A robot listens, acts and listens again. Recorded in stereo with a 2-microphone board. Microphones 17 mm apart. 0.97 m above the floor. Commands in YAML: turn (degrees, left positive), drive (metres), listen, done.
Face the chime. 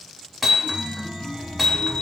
turn: 90
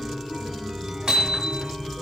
done: "Facing the chime, 1 to 2 m away."